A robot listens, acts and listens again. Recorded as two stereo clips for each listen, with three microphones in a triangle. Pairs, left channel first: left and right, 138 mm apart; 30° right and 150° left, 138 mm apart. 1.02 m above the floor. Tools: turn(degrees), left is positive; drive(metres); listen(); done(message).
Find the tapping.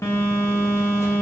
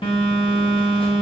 listen()
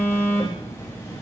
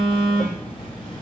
listen()
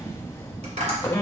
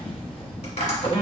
turn(degrees=-60)
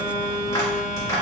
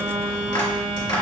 turn(degrees=20)
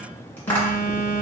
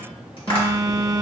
turn(degrees=10)
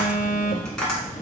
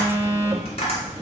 done("Facing the tapping, 2 to 4 m away.")